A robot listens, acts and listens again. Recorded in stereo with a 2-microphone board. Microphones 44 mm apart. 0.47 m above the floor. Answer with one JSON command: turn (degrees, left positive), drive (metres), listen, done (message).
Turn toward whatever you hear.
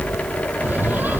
{"turn": -45}
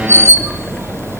{"turn": -90}
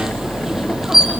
{"turn": -10}
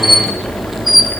{"done": "Found it: a squeak, straight ahead, 2 to 4 m away."}